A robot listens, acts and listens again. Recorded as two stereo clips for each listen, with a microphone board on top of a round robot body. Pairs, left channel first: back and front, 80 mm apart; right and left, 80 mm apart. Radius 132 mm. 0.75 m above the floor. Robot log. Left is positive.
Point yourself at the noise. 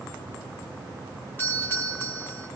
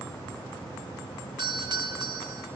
note: The doorbell: 115° left.
cmd yaw +115
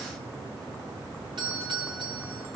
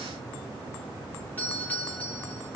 note: The doorbell is now 20° right.
cmd yaw -20
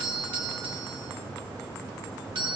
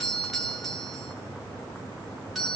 end: Found it: a doorbell, straight ahead.